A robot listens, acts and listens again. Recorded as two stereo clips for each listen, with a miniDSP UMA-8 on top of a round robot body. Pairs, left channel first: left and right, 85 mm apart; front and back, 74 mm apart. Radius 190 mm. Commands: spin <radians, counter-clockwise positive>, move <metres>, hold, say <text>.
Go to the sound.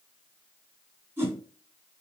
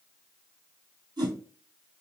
spin -2.71
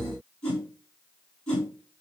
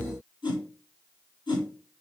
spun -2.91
spin 0.26
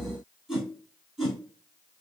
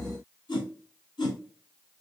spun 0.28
move 1.0
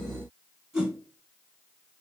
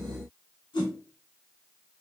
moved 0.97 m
spin -0.17
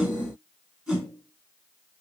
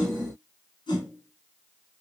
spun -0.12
move 1.0
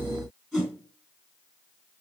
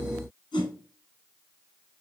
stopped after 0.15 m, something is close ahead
say I am next to the whoosh.